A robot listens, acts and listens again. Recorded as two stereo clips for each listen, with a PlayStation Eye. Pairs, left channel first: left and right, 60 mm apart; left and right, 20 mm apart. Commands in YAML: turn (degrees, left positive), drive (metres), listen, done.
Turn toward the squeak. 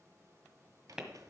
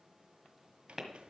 turn: -70
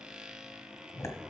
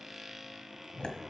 turn: -15
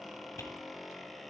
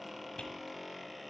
done: "Facing the squeak, under 1 m away."